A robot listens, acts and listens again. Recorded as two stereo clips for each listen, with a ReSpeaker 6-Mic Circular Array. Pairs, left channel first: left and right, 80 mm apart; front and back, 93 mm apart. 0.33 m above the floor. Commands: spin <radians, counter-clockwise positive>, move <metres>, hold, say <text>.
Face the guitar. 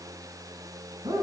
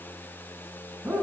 hold
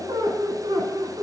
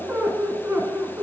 hold
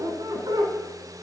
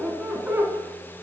say I can't make out a guitar to turn to.